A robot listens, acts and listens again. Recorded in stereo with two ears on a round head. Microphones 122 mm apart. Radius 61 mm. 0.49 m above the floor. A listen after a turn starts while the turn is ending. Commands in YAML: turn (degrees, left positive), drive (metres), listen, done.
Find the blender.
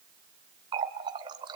listen: true
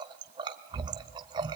listen: true
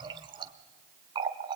done: "I can't make out a blender, only a running tap."